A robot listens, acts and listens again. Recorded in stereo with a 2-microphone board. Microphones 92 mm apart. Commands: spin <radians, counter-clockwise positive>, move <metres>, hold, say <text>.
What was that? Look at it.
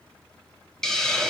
spin 0.52
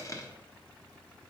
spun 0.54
spin 2.44
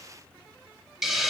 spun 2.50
say Found it: a hiss, straight ahead.